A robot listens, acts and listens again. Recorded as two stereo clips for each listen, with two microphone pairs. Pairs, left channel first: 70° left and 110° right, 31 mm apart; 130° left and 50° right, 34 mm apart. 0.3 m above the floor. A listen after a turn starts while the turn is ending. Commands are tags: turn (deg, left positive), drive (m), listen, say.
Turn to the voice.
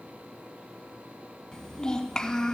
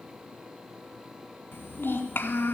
<turn deg="135"/>
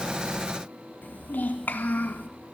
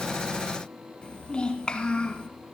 <turn deg="65"/>
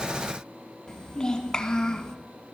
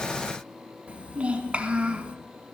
<say>Facing the child speaking.</say>